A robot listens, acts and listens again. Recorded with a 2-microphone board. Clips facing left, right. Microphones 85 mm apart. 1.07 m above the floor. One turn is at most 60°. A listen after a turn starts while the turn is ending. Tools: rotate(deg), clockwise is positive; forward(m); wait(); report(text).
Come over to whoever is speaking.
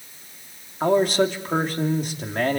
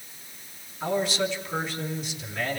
rotate(-50)
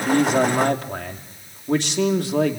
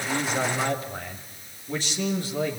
rotate(-60)
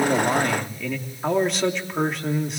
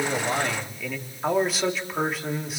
forward(1.0)
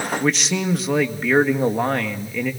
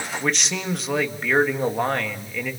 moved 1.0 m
forward(1.0)
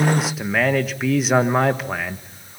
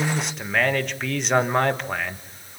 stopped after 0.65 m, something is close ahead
report("Arrived at the man speaking, straight ahead.")